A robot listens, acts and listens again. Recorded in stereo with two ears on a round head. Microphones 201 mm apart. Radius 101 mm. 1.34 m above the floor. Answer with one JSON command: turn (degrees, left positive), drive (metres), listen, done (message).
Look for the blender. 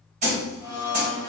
{"turn": 20}
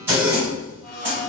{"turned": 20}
{"turn": 140}
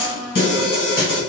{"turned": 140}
{"done": "Facing the blender."}